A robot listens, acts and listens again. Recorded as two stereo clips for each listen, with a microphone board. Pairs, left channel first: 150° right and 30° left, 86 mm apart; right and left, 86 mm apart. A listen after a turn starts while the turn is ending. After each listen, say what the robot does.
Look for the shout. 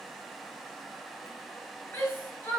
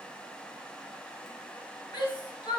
Turn 85° right.
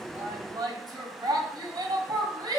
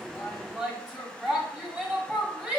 Turn 15° left.
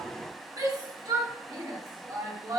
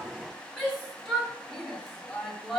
Facing the shout, 1 to 2 m away.